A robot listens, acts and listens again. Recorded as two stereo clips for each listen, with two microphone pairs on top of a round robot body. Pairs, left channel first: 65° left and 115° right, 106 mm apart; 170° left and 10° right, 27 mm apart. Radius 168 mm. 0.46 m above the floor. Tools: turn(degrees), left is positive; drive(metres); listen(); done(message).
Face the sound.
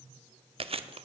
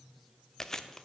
turn(degrees=-125)
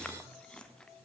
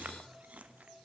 turn(degrees=-20)
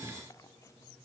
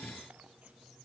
listen()
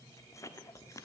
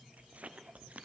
done("Facing the chewing.")